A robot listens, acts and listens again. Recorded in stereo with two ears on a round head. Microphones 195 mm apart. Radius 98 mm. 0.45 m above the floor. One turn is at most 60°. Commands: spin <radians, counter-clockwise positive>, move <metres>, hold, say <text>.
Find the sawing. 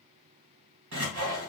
spin -1.05
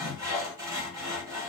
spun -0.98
spin -0.26
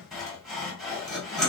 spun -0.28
say Found it: sawing, straight ahead.